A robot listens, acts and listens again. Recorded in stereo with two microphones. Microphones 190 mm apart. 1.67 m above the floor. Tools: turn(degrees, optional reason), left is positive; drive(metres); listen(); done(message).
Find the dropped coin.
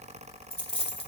turn(degrees=30, reason="The dropped coin: about 30° left or 150° left.")
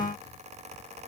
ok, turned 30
listen()
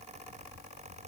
done("I heard a dropped coin, but can't make it out now. It was about straight ahead or 120° left.")